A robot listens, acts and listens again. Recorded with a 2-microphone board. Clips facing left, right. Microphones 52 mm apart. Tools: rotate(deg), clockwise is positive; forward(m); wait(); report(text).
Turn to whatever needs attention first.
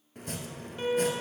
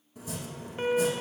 rotate(30)
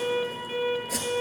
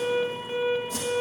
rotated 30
report("Facing the alarm.")